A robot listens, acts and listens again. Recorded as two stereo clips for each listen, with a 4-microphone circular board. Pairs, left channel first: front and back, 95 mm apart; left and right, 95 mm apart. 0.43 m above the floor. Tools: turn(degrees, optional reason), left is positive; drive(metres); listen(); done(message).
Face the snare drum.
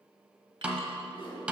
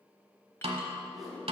turn(degrees=-100, reason="The snare drum: 100° right.")
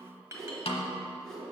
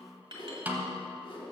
turn(degrees=-20, reason="The snare drum is now 20° right.")
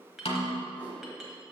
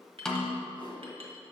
turn(degrees=10, reason="The snare drum is now 10° left.")
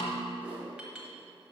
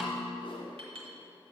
done("Facing the snare drum, under 1 m away.")